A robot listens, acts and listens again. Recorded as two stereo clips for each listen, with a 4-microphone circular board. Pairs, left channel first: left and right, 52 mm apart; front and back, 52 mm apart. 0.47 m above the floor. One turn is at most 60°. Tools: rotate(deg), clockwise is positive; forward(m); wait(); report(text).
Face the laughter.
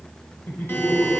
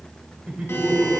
rotate(-60)
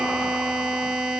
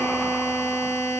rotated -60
rotate(-60)
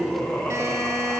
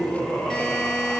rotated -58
rotate(-45)
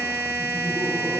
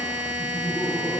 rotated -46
wait()
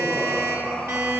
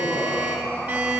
rotate(-20)
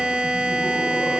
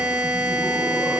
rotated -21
wait()
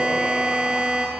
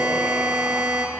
wait()
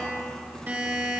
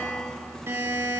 report("Facing where the laughter came from. I can't hear it now.")